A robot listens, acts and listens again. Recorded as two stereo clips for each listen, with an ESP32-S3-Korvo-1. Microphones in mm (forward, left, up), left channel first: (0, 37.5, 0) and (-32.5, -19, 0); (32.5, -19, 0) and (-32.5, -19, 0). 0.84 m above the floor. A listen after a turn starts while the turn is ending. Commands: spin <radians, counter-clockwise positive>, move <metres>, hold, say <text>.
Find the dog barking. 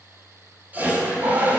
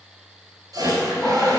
spin -1.66
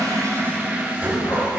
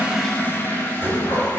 hold
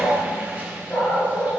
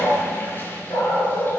spin 0.17
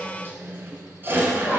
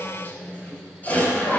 hold
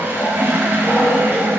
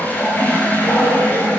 say Facing the dog barking.